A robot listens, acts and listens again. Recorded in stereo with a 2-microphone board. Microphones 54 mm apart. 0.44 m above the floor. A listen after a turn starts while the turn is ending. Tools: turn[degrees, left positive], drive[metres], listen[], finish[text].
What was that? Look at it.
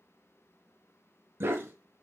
Thought: The dog barking: about 50° right or 130° right.
Action: turn[-50]
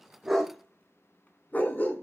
Thought: So it is at 40° left.
Action: turn[40]
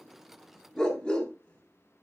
Thought: The dog barking is now 25° left.
Action: turn[25]
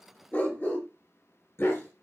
Thought: The dog barking is now 45° left.
Action: turn[45]
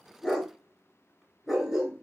Action: finish[Found it: a dog barking, straight ahead, 1 to 2 m away.]